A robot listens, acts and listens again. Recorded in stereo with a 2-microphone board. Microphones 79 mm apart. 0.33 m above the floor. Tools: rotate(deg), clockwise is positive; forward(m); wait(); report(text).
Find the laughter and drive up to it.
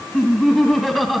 rotate(-30)
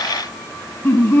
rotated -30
rotate(-150)
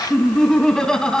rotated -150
rotate(-10)
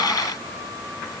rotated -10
wait()
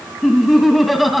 forward(1.0)
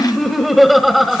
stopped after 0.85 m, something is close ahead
report("I am next to the laughter.")